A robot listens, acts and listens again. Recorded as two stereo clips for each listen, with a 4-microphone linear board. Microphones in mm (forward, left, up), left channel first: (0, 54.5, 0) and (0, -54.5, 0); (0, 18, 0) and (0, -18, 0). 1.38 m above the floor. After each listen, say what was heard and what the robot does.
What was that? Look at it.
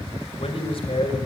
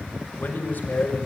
The man speaking: about 55° left or 125° left. Turn 55° left.
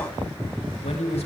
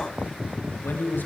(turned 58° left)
So it is at 80° left. Turn 80° left.
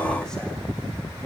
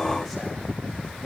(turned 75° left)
The man speaking is now 10° left. Turn 10° left.
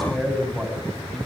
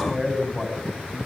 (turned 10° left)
Found it: a man speaking, straight ahead.